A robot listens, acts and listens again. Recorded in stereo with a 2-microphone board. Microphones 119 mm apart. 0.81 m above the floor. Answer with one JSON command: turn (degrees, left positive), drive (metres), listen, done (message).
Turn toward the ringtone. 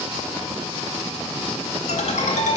{"turn": 90}
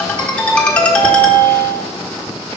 {"turn": 10}
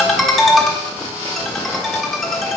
{"done": "Found it: a ringtone, straight ahead, 1 to 2 m away."}